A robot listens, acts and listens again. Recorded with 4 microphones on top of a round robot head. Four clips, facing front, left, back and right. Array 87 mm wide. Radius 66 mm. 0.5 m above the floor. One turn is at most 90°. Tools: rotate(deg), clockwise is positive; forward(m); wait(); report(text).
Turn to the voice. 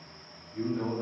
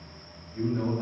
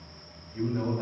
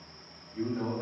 rotate(-90)
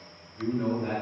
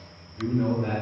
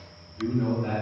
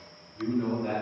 rotate(-65)
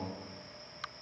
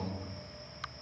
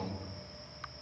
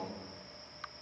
wait()
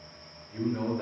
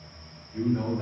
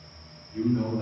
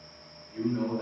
report("Facing the man speaking.")